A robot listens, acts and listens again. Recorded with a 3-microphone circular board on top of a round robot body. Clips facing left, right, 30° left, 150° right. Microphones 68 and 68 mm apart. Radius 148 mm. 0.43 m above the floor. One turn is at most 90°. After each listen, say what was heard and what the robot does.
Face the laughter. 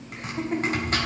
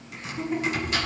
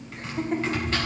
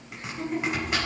The laughter: 60° left. Turn 60° left.
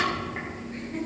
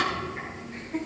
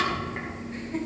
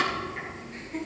The laughter is now 10° right. Turn 10° right.
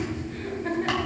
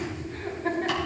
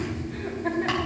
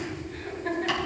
Found it: laughter, straight ahead, 2 to 4 m away.